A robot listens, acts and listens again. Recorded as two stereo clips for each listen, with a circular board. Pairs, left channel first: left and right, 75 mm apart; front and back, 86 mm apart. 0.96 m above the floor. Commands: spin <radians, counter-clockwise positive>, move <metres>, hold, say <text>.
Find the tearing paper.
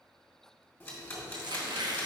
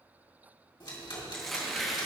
spin -1.48
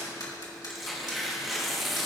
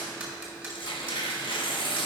say Found it: tearing paper, straight ahead, 1 to 2 m away.